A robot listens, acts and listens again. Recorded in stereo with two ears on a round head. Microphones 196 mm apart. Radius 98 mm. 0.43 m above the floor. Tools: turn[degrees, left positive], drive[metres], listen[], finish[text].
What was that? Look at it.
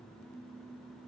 Action: listen[]
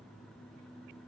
Action: listen[]
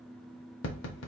Thought: The tapping: about 60° left or 120° left.
Action: turn[60]
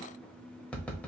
Action: finish[Found it: tapping, straight ahead, under 1 m away.]